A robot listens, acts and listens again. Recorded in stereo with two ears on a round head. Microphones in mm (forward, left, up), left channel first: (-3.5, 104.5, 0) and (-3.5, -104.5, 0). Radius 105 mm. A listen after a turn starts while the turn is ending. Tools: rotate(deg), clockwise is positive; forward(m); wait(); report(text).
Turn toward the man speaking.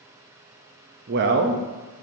rotate(50)
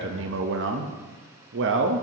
rotate(70)
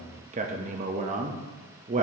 rotate(40)
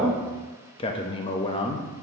rotate(-25)
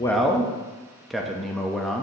report("Found it: a man speaking, straight ahead.")